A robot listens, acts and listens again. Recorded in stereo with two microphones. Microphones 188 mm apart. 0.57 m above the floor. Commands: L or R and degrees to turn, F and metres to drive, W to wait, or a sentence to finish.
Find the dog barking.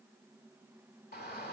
W
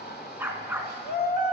R30
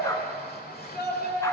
W
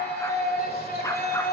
W
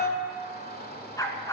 L20
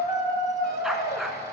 Found it: a dog barking, straight ahead.